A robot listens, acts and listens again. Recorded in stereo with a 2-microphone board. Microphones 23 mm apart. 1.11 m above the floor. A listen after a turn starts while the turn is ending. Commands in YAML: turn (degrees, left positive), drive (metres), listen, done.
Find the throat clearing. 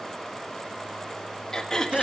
turn: 30
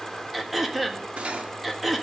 done: "Facing the throat clearing."